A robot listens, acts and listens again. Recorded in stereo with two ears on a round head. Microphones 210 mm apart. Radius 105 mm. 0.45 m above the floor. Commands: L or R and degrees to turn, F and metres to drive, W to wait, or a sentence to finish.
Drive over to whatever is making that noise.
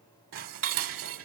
R60
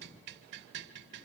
R55
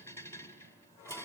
L10
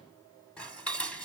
F1.0
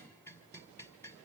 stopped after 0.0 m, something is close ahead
L10
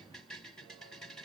Something is in my way. I am facing the dishes clattering but have not reached it.